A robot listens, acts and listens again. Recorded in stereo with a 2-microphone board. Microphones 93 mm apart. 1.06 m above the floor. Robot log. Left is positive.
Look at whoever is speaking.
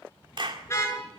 cmd idle
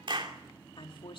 note: The woman speaking: about 65° left or 115° left.
cmd yaw +65
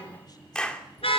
cmd idle
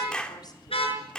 cmd idle
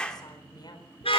note: So it is at 50° left.
cmd yaw +50
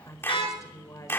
note: The woman speaking is now 35° left.
cmd yaw +35
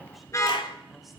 cmd idle
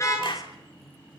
cmd idle
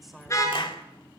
end: Found it: a woman speaking, straight ahead, over 4 m away.